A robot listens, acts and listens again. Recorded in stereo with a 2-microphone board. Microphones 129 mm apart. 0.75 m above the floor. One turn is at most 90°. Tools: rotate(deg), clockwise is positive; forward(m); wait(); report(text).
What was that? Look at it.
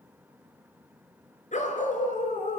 rotate(-70)
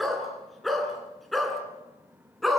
report("Found it: a dog barking, straight ahead.")